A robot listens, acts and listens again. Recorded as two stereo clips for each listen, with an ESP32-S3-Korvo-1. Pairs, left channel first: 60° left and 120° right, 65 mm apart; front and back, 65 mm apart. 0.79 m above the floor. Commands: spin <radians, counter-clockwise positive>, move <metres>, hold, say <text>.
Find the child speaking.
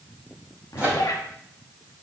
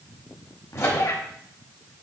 hold
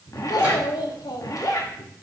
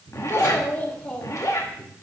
spin 1.57
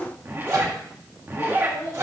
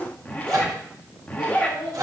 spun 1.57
spin 0.26
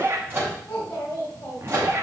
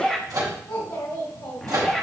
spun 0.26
say Found it: a child speaking, straight ahead, 2 to 4 m away.